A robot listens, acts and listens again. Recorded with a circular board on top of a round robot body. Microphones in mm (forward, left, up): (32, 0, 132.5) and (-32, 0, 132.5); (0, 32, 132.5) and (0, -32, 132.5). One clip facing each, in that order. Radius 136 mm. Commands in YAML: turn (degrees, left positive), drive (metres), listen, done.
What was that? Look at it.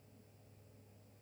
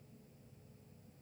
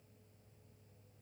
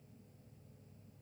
listen: true
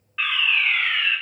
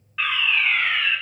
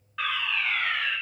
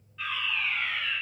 turn: 90
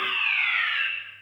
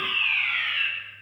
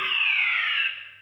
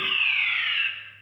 turn: 25
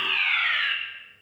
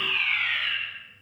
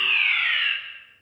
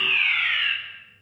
turn: -10
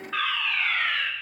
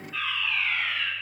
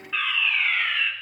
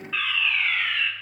done: "Facing the fire alarm, over 4 m away."